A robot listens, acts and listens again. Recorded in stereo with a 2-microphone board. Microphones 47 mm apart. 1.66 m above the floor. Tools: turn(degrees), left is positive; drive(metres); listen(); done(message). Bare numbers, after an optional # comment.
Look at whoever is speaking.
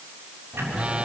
listen()
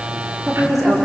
turn(30)
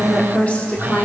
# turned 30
# So it is at 150° left.
turn(150)
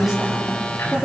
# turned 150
listen()
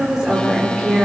# The woman speaking is now 10° right.
turn(-10)
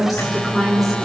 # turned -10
done("Facing the woman speaking, over 4 m away.")